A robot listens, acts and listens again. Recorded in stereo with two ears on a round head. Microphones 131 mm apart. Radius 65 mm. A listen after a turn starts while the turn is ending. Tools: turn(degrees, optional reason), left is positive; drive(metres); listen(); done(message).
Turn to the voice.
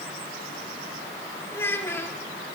turn(degrees=15, reason="The child speaking: about 15° left or 165° left.")
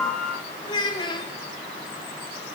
turn(degrees=150, reason="So it is at 150° left.")
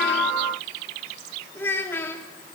turn(degrees=15, reason="The child speaking is now 15° left.")
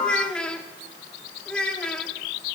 done("Facing the child speaking, 2 to 4 m away.")